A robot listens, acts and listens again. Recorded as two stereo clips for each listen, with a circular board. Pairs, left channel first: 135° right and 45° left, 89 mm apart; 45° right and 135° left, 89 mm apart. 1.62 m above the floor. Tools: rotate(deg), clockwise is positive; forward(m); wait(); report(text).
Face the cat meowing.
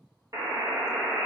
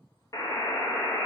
wait()
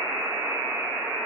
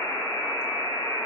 wait()
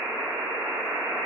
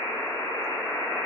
report("I can't make out a cat meowing to turn to.")